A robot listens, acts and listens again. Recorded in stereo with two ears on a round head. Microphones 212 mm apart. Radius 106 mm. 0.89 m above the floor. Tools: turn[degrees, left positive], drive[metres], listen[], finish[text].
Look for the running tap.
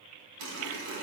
Action: turn[-90]
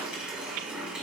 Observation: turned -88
Action: finish[Found it: a running tap, straight ahead.]